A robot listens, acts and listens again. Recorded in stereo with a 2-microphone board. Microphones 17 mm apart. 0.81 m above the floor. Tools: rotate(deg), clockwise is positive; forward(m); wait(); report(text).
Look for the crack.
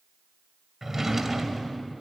wait()
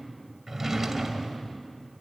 wait()
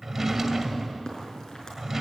rotate(-40)
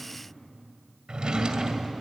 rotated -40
wait()
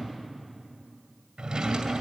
report("I heard a crack, but can't make it out now. It was about straight ahead or 100° left.")